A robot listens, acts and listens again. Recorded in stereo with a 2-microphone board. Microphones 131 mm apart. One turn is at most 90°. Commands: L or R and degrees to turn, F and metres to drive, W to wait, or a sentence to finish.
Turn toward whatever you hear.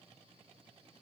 W
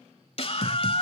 L45
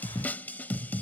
L15
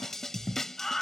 Found it: a scream, straight ahead.